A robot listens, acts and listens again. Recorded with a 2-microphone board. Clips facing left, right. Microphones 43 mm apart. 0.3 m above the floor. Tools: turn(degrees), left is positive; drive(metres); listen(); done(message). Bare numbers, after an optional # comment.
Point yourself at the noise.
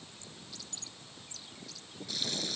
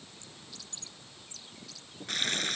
# The frying: about 50° right or 130° right.
turn(-50)
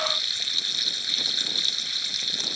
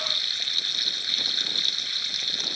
done("Found it: frying, straight ahead.")